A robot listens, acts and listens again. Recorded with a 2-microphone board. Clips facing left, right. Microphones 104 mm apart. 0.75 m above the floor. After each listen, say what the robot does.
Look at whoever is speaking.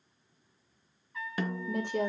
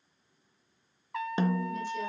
Turn 60° left.
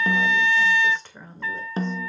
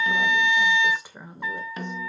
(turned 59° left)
Turn 15° right.
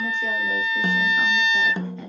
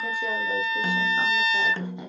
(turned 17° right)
Keep listening.
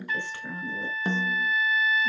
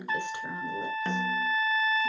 Turn 20° right.
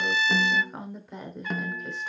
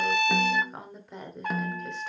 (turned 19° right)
Found it: a woman speaking, straight ahead.